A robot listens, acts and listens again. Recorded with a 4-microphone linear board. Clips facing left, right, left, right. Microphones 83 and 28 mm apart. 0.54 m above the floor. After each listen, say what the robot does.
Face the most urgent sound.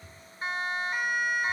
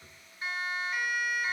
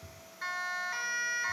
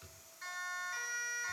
Turn 40° left.
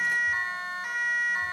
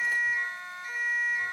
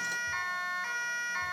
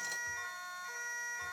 Turn 95° left.
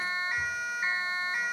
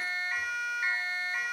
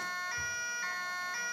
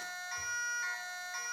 Turn 15° left.
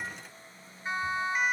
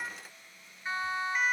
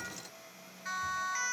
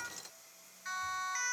Found it: a siren, straight ahead, over 4 m away.